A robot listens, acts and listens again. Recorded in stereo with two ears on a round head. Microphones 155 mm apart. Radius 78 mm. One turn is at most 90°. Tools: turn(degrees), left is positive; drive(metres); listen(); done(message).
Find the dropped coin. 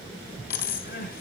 turn(degrees=55)
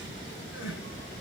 listen()
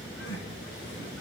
done("I heard a dropped coin, but can't make it out now. It was about straight ahead or 70° left.")